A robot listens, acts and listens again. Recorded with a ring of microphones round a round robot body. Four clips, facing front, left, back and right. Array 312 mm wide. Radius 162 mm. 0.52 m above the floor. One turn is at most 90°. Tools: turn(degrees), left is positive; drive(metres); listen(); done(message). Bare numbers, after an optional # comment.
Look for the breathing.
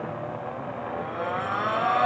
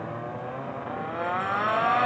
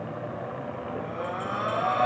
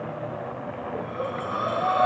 # The breathing: 95° right.
turn(-90)
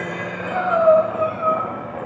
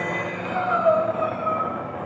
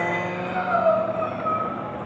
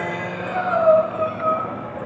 # The breathing is now 30° right.
turn(-30)
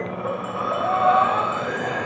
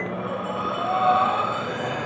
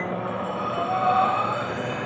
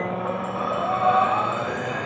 # The breathing is now 10° right.
turn(-10)
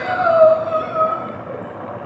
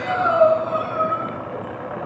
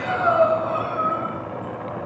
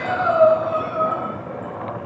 done("Found it: breathing, straight ahead.")